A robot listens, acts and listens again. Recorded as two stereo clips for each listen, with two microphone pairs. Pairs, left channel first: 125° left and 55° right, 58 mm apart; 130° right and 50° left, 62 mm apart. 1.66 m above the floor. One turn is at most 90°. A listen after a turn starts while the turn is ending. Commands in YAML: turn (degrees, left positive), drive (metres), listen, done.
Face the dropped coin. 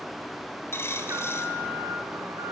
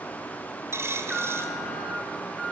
turn: 90
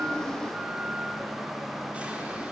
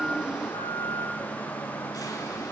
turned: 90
done: "I heard a dropped coin from this way, but can't make it out now."